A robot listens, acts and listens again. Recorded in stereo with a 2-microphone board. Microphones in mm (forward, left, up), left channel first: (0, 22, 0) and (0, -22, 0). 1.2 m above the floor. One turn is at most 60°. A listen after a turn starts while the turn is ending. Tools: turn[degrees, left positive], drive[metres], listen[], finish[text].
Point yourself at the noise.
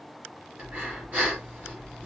Thought: The breathing: about 40° right or 140° right.
Action: turn[-40]
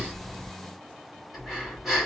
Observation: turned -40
Action: finish[Facing the breathing, 2 to 4 m away.]